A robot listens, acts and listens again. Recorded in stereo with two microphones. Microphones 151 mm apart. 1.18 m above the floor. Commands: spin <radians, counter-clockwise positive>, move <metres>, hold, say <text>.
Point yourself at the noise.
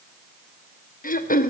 spin 1.13
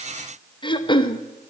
spin 0.61
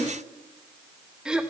say Facing the throat clearing.